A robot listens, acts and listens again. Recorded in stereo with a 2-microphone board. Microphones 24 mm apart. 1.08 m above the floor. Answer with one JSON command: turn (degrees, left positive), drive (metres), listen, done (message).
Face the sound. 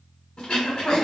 {"turn": 45}
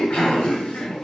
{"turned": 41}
{"turn": 85}
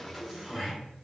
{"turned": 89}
{"done": "Found it: throat clearing, straight ahead, 1 to 2 m away."}